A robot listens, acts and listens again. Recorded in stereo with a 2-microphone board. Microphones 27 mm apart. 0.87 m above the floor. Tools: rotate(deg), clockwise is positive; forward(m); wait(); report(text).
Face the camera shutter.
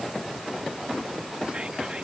wait()
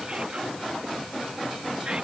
wait()
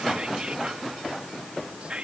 report("I can't make out a camera shutter, only whispering.")